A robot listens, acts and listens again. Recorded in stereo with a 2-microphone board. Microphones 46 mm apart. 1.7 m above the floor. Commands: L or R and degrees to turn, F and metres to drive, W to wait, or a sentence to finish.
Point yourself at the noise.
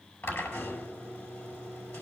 L65
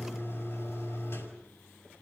L50
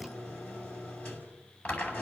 L20
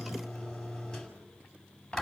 Facing the drill, over 4 m away.